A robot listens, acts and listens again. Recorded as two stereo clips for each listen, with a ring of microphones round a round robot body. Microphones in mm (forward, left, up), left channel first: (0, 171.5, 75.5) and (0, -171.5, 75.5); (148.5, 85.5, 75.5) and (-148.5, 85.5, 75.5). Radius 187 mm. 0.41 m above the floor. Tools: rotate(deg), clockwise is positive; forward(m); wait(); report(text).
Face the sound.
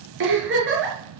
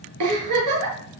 rotate(150)
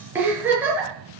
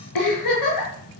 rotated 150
report("Found it: a giggle, straight ahead.")